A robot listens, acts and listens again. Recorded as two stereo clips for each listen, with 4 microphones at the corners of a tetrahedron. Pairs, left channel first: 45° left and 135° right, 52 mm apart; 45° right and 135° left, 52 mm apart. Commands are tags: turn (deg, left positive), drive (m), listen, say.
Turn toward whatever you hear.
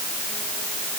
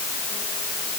<listen/>
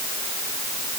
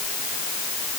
<listen/>
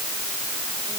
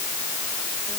<say>I can't make out anything.</say>